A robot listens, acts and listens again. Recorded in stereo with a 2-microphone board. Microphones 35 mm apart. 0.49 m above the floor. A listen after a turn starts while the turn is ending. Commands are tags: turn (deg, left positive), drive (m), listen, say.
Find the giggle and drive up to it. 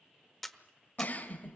<turn deg="50"/>
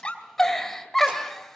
<drive m="1.0"/>
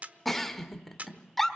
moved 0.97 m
<turn deg="10"/>
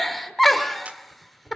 <drive m="1.0"/>
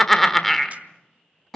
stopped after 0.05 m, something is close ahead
<turn deg="10"/>
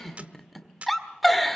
<say>Arrived at the giggle, straight ahead.</say>